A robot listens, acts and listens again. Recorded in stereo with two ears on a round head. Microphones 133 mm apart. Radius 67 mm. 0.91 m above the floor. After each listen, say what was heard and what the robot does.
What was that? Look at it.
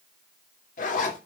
The zipper: about 55° left or 125° left. Turn 55° left.
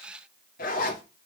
So it is at 65° left. Turn 65° left.
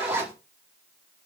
The zipper is now 15° right. Turn 15° right.
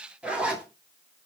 Facing the zipper.